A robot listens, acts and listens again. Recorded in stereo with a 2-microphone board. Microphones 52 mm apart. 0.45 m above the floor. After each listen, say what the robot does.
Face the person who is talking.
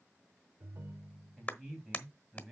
Turn 30° right.
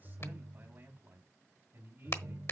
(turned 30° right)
Turn 135° right.
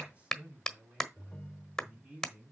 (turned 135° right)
Turn 25° right.
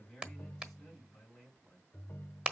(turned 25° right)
Facing the man speaking, over 4 m away.